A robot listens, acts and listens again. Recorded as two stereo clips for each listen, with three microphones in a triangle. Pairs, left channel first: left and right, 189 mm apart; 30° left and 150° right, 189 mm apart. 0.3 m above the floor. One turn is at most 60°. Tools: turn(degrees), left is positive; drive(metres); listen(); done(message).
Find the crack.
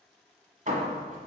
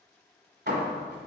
listen()
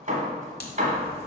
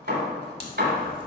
turn(degrees=60)
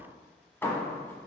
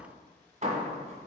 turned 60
turn(degrees=20)
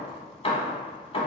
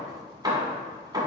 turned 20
done("Facing where the crack came from. I can't hear it now.")